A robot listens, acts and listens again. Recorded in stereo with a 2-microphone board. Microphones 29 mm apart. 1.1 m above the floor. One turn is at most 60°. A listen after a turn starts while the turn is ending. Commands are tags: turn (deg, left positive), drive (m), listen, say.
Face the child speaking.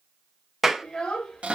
<turn deg="35"/>
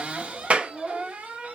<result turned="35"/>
<say>Found it: a child speaking, straight ahead.</say>